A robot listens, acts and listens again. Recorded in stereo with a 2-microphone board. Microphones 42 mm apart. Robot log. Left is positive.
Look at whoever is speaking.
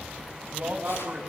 note: The man speaking: about 40° right or 140° right.
cmd yaw -40
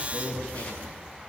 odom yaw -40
note: So it is at 100° right.
cmd yaw -100
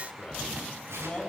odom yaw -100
note: The man speaking is now 25° left.
cmd yaw +25
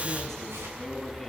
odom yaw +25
note: The man speaking is now 10° left.
cmd yaw +10
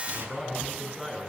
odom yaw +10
end: Facing the man speaking, over 4 m away.